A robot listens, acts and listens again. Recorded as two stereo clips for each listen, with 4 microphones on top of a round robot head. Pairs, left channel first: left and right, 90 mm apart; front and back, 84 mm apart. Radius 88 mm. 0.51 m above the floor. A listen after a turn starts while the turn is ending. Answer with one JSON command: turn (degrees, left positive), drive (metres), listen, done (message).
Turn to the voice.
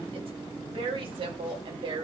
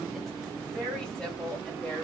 {"turn": -80}
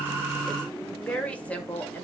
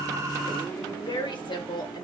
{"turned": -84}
{"turn": 20}
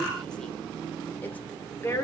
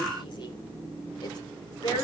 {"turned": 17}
{"turn": 30}
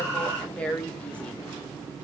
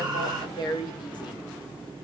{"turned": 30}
{"turn": 15}
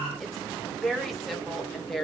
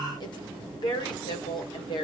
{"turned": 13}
{"done": "Facing the woman speaking, 2 to 4 m away."}